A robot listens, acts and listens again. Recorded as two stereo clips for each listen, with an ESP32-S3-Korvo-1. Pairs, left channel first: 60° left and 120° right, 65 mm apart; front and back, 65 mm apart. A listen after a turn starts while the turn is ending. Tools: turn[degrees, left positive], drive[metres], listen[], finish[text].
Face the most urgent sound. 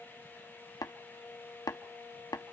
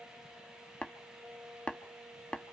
Action: listen[]
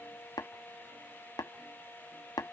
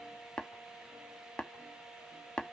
Action: listen[]
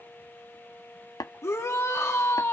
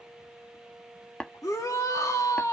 Thought: The shout: 20° left.
Action: turn[20]
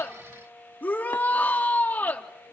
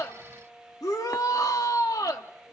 Action: finish[Found it: a shout, straight ahead, 2 to 4 m away.]